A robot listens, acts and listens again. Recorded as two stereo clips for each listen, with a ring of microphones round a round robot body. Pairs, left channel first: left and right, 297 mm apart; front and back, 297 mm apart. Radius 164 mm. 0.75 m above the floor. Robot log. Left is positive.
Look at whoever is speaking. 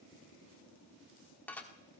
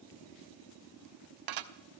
cmd idle
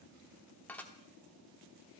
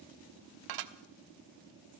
cmd idle
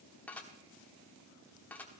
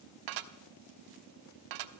end: I can't make out anyone speaking, only dishes clattering.